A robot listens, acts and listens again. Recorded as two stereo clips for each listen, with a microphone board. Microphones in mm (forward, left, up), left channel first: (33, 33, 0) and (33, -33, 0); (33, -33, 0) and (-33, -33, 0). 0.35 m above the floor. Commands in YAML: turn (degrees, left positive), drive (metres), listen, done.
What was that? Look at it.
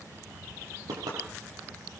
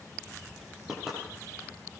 turn: -95
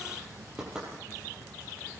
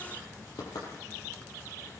turn: -10
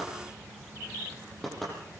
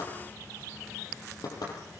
done: "Facing the knocking."